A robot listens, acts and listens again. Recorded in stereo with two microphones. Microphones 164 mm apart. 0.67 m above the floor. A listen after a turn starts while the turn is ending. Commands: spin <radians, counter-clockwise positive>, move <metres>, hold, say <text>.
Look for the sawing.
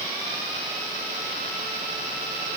hold
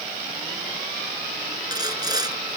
spin -0.44
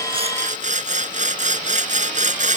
spin -2.27
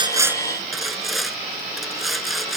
say Found it: sawing, straight ahead.